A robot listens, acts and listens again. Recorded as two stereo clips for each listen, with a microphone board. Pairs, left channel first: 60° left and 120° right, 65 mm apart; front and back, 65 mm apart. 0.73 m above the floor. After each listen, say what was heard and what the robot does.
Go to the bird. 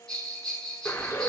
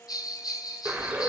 The bird: 110° left. Turn 110° left.
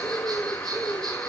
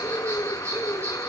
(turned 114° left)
Drive 1.0 m forward.
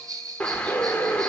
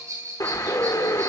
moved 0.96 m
The bird is now 10° right. Turn 10° right.
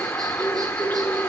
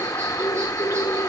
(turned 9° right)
Drive 1.0 m forward.
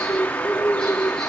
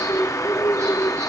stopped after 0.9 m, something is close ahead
Arrived at the bird, straight ahead.